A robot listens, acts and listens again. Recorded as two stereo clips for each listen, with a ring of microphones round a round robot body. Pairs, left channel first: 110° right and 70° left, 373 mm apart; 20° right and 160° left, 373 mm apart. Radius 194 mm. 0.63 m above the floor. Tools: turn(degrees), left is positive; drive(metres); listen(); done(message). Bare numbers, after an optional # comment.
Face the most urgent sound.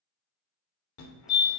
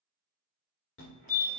# The fire alarm: 75° right.
turn(-75)
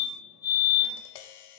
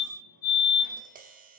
done("Found it: a fire alarm, straight ahead, 2 to 4 m away.")